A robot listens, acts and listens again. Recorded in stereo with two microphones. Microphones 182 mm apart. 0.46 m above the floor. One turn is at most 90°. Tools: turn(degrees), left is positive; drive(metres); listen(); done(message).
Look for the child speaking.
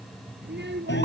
turn(degrees=-75)
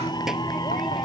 listen()
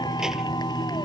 listen()
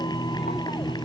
done("I heard a child speaking, but can't make it out now. It was about straight ahead or 30° right.")